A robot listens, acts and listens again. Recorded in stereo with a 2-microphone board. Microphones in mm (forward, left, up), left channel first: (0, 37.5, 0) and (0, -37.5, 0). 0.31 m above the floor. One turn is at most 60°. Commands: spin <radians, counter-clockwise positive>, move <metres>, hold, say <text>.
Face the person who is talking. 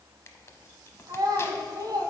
spin -1.05
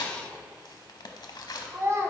spin -0.70
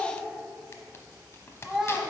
say Facing the child speaking, 1 to 2 m away.